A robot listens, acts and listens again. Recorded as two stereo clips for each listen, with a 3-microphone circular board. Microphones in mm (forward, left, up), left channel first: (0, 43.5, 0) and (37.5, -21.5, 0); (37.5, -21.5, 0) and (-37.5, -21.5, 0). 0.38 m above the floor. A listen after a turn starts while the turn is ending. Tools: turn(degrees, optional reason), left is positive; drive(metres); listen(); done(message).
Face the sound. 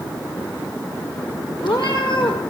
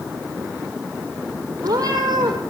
turn(degrees=140, reason="The cat meowing: 140° left.")
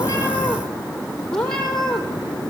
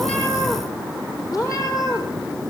turn(degrees=40, reason="The cat meowing is now 40° left.")
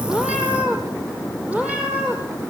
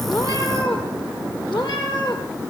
turn(degrees=15, reason="The cat meowing is now 15° left.")
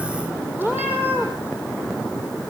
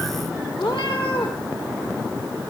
done("Found it: a cat meowing, straight ahead, over 4 m away.")